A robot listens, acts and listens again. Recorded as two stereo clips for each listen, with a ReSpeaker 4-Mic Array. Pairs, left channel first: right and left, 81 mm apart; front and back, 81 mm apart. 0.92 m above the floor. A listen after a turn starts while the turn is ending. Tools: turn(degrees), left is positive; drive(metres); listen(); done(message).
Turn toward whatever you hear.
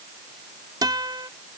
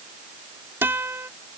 turn(degrees=115)
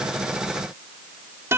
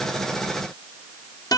turn(degrees=30)
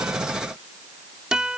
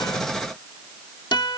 turn(degrees=10)
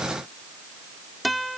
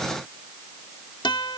done("Facing the guitar.")